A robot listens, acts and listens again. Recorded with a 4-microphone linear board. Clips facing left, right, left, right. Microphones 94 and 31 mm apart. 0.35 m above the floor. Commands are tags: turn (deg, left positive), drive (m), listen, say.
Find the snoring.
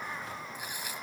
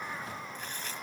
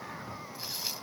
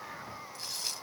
<listen/>
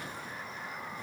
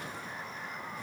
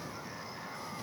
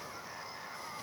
<listen/>
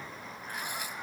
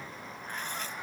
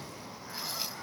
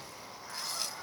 <say>I can't make out snoring, only tearing paper.</say>